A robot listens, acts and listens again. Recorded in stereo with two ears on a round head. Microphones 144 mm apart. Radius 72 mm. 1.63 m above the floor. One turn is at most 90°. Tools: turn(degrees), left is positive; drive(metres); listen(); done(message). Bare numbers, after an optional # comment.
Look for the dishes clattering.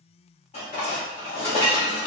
# The dishes clattering: about 35° left or 145° left.
turn(35)
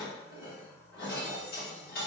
# So it is at 100° left.
turn(90)
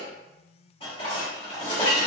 # The dishes clattering is now 35° left.
turn(35)
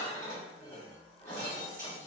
# The dishes clattering is now 15° left.
turn(15)
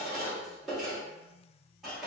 done("Facing the dishes clattering.")